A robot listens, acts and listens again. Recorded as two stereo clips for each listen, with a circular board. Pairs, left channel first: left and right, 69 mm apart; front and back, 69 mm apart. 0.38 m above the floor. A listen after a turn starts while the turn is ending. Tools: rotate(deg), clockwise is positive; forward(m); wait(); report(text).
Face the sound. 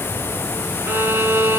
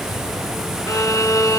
rotate(35)
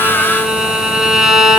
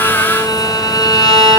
rotate(10)
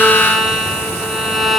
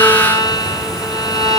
report("Found it: a violin, straight ahead.")